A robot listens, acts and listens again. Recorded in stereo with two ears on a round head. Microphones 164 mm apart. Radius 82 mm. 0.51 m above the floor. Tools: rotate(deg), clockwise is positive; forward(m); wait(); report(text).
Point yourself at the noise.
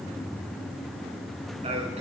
rotate(35)
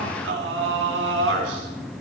rotate(100)
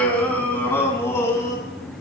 rotate(-15)
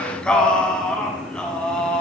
report("Facing the singing, 2 to 4 m away.")